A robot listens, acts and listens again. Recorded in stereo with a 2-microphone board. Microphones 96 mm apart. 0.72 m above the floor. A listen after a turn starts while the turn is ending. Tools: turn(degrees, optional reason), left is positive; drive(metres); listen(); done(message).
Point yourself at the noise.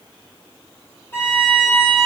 turn(degrees=25, reason="The violin: about 25° left or 155° left.")
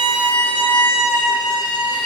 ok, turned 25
turn(degrees=130, reason="So it is at 130° left.")
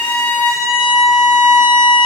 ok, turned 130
done("Found it: a violin, straight ahead, 2 to 4 m away.")